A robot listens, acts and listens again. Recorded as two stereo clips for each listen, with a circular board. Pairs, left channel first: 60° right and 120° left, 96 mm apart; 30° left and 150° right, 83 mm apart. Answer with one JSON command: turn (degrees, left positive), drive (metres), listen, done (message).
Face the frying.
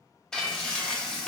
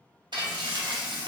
{"turn": -145}
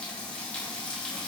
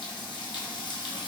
{"turn": 15}
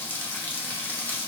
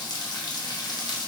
{"done": "Facing the frying, under 1 m away."}